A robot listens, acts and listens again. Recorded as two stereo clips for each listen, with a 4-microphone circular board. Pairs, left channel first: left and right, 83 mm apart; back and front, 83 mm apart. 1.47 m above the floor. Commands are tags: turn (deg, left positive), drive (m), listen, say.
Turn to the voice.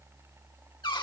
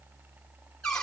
<listen/>
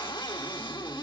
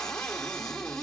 <listen/>
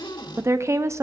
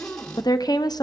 <turn deg="-145"/>
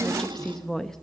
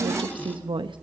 <say>Facing the woman speaking.</say>